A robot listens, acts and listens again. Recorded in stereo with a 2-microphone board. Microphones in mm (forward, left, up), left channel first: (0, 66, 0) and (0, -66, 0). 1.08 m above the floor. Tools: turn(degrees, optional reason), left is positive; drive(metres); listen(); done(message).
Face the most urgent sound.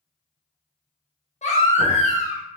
turn(degrees=60, reason="The baby crying: about 60° left or 120° left.")
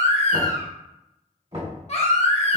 turn(degrees=55, reason="So it is at 55° left.")
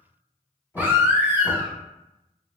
turn(degrees=-15, reason="The baby crying is now 15° right.")
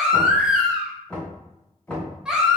done("Facing the baby crying.")